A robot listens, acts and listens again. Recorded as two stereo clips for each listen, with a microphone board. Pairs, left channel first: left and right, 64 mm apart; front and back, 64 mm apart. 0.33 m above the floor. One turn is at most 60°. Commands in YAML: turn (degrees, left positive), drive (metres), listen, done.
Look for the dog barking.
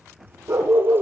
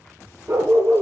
turn: -60
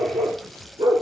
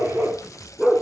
turn: -60
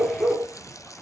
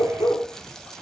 turn: -30
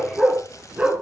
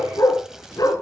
turn: -20
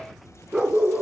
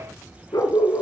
turn: -15
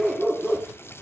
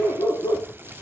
done: "Facing the dog barking, 2 to 4 m away."